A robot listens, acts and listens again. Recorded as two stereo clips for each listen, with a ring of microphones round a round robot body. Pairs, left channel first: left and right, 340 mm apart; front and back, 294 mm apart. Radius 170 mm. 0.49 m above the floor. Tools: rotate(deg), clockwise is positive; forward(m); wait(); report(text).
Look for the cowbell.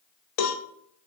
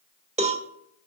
rotate(-110)
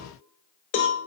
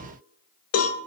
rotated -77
rotate(-35)
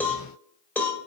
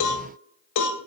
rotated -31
report("Facing the cowbell.")